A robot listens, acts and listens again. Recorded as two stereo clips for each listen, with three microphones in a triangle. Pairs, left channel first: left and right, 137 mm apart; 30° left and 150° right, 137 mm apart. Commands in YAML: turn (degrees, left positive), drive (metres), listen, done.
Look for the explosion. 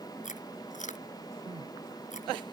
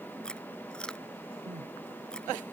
listen: true
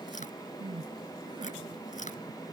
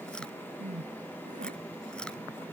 listen: true
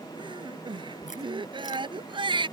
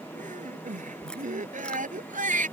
done: "I can't make out an explosion to turn to."